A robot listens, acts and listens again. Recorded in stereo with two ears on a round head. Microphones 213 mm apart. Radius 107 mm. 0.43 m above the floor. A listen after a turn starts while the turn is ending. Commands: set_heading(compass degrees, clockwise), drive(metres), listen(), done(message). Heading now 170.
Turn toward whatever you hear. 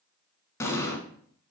set_heading(140)
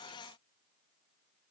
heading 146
listen()
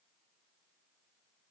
done("I heard an explosion, but can't make it out now. It was about 10° right or 145° left.")